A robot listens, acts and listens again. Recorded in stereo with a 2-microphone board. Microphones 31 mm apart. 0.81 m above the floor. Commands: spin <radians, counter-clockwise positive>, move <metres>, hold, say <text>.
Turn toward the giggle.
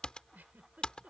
spin -1.31
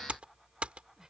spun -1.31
hold
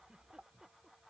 hold
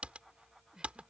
spin -0.44
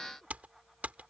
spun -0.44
hold
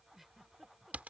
spin -0.17
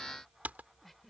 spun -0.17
say Facing the giggle.